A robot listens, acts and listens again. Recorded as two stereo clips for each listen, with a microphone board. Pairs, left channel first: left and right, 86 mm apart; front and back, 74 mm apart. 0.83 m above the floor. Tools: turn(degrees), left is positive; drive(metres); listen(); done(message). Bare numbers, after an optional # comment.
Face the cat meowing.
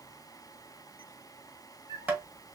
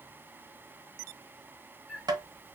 # The cat meowing: 90° left.
turn(90)
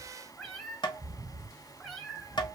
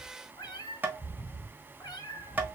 # The cat meowing is now 10° left.
turn(10)
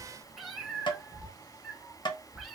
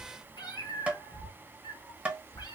done("Facing the cat meowing, 2 to 4 m away.")